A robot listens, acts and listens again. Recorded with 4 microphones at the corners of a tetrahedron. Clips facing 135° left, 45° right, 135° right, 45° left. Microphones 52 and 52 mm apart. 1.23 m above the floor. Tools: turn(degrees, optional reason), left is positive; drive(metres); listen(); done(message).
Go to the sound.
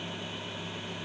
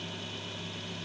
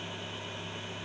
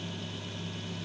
listen()
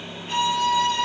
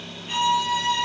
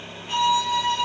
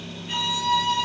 turn(degrees=175, reason="The violin: 175° left.")
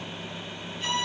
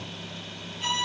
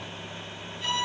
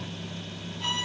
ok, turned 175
drive(metres=1.0)
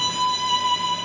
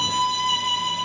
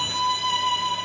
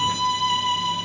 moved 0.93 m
turn(degrees=10, reason="The violin is now 10° left.")
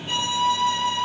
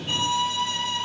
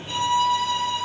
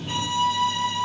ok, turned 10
drive(metres=1.0)
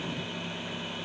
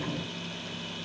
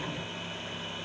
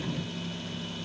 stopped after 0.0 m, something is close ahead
listen()
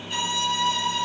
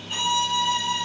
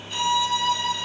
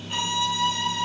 done("Arrived at the violin, straight ahead.")